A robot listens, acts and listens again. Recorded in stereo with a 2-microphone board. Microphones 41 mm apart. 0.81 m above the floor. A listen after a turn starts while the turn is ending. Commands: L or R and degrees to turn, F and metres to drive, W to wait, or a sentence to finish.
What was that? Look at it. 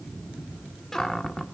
L30
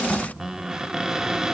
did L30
R15
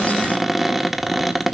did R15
Found it: a cupboard door, straight ahead, 1 to 2 m away.